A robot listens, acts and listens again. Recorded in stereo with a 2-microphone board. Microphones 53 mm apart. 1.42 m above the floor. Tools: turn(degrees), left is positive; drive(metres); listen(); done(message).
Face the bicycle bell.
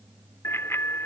turn(degrees=55)
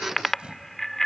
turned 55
done("Found it: a bicycle bell, straight ahead.")